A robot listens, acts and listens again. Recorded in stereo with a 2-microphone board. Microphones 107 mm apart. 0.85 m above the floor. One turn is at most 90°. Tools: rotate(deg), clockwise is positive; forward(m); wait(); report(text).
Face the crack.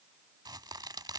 rotate(40)
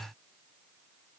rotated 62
wait()
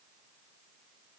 report("I heard a crack, but can't make it out now. It was about 20° left or 75° right.")